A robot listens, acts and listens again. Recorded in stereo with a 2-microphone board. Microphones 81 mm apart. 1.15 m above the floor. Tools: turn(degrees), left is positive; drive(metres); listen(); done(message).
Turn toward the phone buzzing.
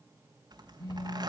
turn(degrees=45)
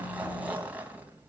listen()
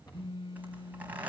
turn(degrees=90)
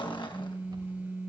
turn(degrees=-20)
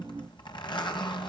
listen()
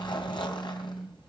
done("Facing the phone buzzing.")